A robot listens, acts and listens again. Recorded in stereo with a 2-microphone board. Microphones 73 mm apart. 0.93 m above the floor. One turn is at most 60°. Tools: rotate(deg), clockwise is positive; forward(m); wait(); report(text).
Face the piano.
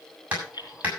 wait()
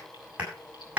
wait()
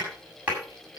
report("I can't make out a piano, only keys jangling and hammering.")